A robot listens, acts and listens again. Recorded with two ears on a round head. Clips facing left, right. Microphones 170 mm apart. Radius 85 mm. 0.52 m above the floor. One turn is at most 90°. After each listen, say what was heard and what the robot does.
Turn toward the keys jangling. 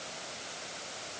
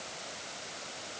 Keep listening.
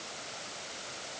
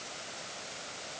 Keep listening.
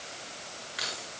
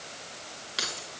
The keys jangling: about 55° right or 125° right. Turn 55° right.
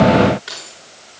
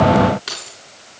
So it is at 60° right. Turn 60° right.
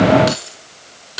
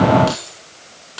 The keys jangling is now 20° left. Turn 20° left.
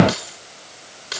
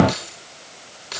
Found it: keys jangling, straight ahead, over 4 m away.